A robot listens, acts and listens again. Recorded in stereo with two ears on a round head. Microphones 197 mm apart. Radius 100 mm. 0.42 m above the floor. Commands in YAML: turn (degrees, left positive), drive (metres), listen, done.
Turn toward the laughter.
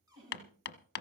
turn: -65
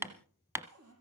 listen: true
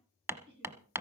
turn: -50
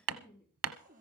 turn: 15
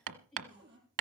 done: "Found it: laughter, straight ahead, over 4 m away."